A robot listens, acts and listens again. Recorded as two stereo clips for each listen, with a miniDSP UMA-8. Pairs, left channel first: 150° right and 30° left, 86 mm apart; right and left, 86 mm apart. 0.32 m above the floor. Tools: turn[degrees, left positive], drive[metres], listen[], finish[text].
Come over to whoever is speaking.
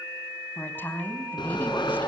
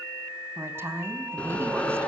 Thought: The woman speaking: 145° left.
Action: turn[145]
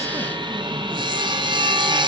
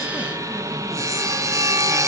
Action: listen[]
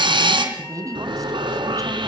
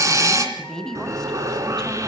Thought: The woman speaking is now 10° right.
Action: turn[-10]
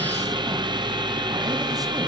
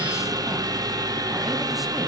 Action: listen[]
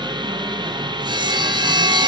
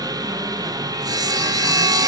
Action: listen[]
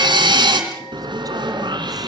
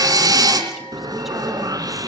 Action: finish[Facing where the woman speaking came from. I can't hear it now. I did not reach it.]